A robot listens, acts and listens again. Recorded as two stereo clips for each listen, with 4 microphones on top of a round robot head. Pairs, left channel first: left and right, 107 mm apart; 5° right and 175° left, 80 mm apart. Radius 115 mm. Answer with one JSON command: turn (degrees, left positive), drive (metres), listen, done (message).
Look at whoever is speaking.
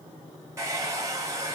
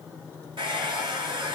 {"listen": true}
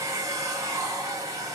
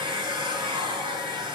{"listen": true}
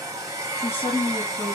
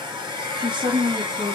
{"turn": 170}
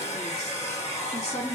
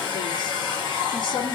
{"done": "Found it: a woman speaking, straight ahead."}